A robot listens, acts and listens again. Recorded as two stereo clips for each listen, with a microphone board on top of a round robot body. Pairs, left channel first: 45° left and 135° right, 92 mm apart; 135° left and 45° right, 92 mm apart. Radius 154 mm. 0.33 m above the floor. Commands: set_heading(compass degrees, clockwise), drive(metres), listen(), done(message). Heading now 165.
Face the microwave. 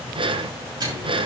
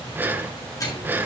set_heading(340)
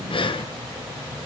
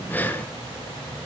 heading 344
listen()
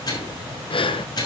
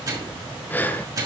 done("Facing the microwave.")